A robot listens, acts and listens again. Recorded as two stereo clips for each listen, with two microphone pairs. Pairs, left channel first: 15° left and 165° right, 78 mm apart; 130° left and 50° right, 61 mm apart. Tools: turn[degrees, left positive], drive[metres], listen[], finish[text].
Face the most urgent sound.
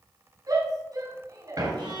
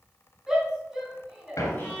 Thought: The shout: 135° right.
Action: turn[-135]
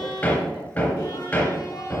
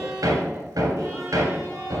Action: listen[]
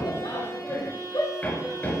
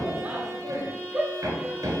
Thought: The shout is now 15° left.
Action: turn[15]
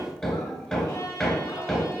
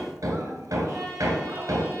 Action: listen[]
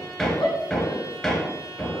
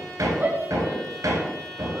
Action: finish[Facing the shout, over 4 m away.]